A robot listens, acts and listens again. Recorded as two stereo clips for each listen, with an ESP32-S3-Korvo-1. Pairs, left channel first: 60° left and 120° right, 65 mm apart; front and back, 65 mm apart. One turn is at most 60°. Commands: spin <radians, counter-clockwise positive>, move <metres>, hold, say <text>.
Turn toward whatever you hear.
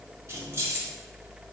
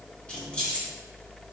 spin -1.05
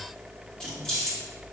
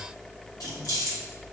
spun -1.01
spin -0.26
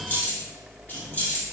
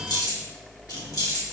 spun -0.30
say Facing the keys jangling.